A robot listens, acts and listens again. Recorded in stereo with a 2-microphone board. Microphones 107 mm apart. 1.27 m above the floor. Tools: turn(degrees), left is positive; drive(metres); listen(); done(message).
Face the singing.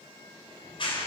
listen()
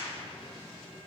listen()
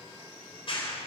done("I can't make out singing, only a clap.")